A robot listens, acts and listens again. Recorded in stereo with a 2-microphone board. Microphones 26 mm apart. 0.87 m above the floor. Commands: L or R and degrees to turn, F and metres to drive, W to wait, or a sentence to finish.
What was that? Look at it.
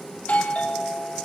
L75
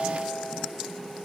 Facing the doorbell, over 4 m away.